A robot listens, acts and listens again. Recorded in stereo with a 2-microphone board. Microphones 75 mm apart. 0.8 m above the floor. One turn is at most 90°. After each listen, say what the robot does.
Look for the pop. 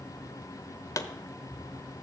Turn 50° left.
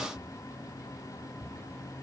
Keep listening.
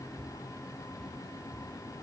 I heard a pop, but can't make it out now. It was about straight ahead or 80° left.